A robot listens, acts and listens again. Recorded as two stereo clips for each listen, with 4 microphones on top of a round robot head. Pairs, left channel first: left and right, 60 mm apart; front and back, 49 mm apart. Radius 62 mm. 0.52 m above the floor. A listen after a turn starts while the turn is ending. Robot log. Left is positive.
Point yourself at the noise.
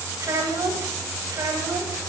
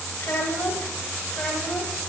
note: The child speaking: 75° right.
cmd yaw -75
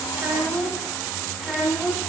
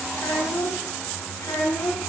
end: Found it: a child speaking, straight ahead, 2 to 4 m away.